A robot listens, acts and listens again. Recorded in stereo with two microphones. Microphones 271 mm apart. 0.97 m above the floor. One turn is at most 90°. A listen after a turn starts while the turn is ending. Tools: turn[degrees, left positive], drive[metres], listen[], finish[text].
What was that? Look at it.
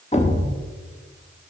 Thought: The thud: about 25° left or 155° left.
Action: turn[25]
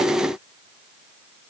Action: listen[]
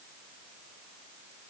Action: finish[I heard a thud, but can't make it out now. It was about straight ahead or 130° left.]